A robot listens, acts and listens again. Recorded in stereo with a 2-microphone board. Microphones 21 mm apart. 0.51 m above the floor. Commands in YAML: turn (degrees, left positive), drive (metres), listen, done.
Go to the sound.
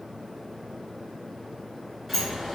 turn: -30
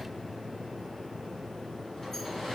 turn: 25
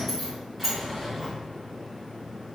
drive: 1.0
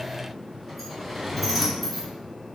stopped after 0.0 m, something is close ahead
done: "Blocked. The sliding door is further on, straight ahead."